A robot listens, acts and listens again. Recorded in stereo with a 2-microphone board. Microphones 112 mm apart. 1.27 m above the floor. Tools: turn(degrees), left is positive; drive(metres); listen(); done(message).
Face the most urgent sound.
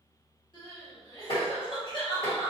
turn(degrees=45)
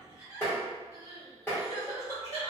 turn(degrees=90)
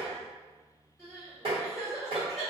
done("Facing the crying, 1 to 2 m away.")